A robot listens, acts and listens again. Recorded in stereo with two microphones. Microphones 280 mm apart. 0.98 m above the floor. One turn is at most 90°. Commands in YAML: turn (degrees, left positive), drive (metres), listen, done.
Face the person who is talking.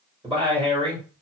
turn: -20
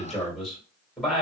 done: "Facing the man speaking."